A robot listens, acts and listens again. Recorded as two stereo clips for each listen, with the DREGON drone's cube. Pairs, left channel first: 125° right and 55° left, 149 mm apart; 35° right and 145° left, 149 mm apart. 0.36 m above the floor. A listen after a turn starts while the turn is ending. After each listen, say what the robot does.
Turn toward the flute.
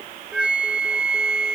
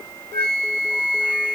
Turn 140° left.
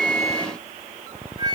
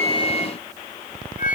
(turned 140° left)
Found it: a flute, straight ahead.